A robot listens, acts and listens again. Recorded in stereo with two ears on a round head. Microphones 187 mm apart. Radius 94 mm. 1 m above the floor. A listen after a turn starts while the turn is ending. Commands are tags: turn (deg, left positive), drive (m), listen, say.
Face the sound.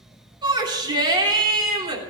<turn deg="-20"/>
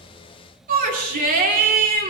<turn deg="-140"/>
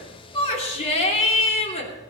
<turn deg="30"/>
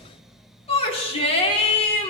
<turn deg="30"/>
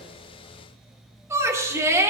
<turn deg="-15"/>
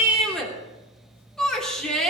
<say>Found it: a shout, straight ahead, 2 to 4 m away.</say>